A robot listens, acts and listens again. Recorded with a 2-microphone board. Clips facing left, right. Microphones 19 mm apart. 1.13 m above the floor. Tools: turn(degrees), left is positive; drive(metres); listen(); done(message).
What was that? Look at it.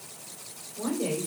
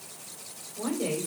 turn(degrees=-30)
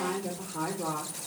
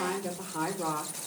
turn(degrees=-140)
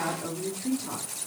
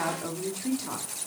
turn(degrees=-35)
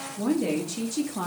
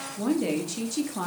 turn(degrees=-10)
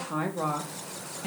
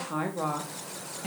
done("Found it: a woman speaking, straight ahead.")